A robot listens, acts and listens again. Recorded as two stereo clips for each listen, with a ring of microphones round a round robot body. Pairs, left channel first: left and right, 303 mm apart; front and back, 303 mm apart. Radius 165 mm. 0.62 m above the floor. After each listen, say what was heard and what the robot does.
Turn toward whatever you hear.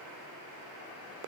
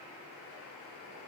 Keep listening.
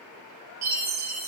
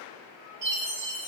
The chime: 120° right. Turn 120° right.
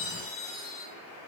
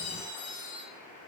The chime is now 25° left. Turn 25° left.
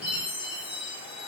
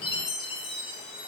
Found it: a chime, straight ahead.